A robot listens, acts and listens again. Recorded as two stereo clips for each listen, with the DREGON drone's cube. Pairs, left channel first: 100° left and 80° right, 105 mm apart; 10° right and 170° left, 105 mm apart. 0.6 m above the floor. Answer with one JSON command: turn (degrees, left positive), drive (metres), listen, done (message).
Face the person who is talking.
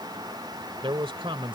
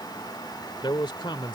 {"turn": -50}
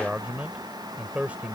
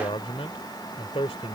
{"done": "Facing the man speaking."}